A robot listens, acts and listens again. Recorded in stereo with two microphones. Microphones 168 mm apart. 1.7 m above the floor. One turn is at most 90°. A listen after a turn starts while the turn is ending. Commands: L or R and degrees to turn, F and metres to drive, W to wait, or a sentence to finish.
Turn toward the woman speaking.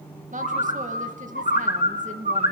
R50
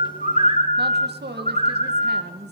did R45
R85
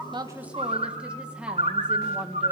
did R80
Facing the woman speaking, 2 to 4 m away.